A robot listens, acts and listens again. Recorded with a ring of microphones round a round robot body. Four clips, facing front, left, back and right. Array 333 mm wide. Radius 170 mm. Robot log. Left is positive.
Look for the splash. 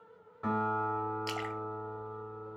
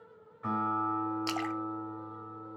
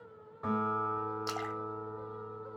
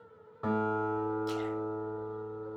note: The splash: 105° left.
cmd yaw +105
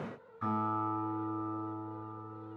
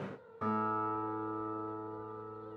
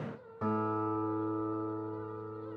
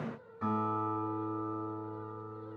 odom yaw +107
end: Facing where the splash came from. I can't hear it now.